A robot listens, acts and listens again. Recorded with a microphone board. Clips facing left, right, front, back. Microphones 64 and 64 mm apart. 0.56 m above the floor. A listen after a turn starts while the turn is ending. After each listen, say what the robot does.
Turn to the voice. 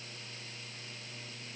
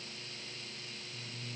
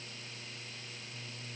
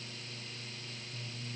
Keep listening.
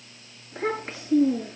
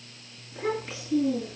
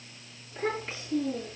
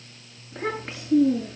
Turn 135° left.
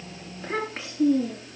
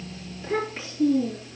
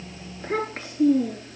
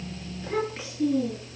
Turn 45° left.
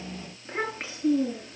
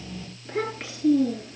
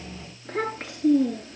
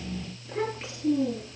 Turn 20° left.
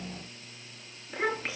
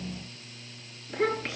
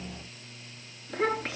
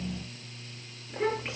Turn 10° left.
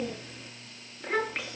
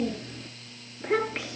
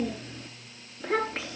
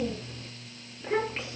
Found it: a child speaking, straight ahead, over 4 m away.